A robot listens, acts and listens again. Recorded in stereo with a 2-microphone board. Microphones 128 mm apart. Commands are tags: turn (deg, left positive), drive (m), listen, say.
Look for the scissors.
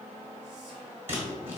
<turn deg="-15"/>
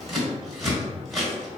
<say>Facing the scissors, 1 to 2 m away.</say>